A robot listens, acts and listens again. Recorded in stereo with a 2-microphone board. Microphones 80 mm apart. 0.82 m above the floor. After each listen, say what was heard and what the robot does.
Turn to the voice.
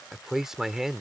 Turn 30° right.
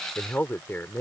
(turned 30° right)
So it is at 25° left. Turn 25° left.
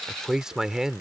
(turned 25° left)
The man speaking is now 10° right. Turn 10° right.
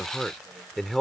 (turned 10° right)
Found it: a man speaking, straight ahead.